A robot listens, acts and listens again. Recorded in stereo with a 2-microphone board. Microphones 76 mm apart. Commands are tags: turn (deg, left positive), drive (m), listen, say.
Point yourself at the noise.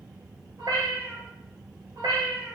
<turn deg="-70"/>
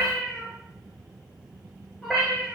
<say>Found it: a cat meowing, straight ahead.</say>